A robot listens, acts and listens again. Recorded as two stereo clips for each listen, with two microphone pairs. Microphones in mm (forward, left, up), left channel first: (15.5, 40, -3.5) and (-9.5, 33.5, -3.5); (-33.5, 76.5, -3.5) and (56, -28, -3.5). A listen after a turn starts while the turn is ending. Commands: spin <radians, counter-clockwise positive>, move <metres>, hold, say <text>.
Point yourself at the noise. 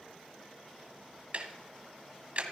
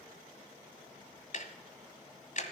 spin 2.62
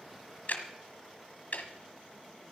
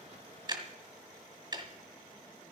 spin 0.17
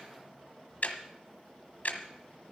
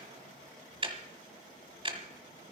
say Facing the ticking, 1 to 2 m away.